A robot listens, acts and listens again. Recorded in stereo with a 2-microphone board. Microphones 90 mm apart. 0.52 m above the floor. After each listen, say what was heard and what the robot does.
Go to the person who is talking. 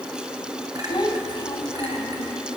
The child speaking: about 45° left or 135° left. Turn 45° left.
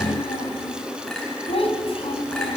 So it is at 85° left. Turn 85° left.
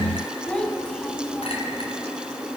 The child speaking is now 15° left. Turn 15° left.
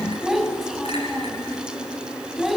Drive 1.0 m forward.
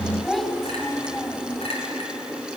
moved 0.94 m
Drive 1.0 m forward.
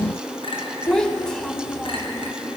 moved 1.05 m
The child speaking is now 10° left. Turn 10° left.
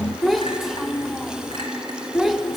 Drive 1.0 m forward.
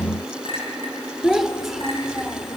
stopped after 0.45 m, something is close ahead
I am next to the child speaking.